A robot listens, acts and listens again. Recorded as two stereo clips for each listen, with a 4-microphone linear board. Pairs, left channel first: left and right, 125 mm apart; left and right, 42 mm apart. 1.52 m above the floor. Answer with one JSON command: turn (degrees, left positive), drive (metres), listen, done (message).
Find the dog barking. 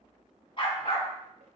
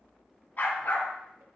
{"turn": 45}
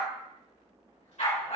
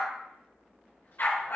{"turn": 110}
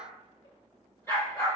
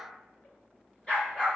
{"turn": 25}
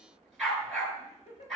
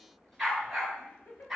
{"done": "Found it: a dog barking, straight ahead."}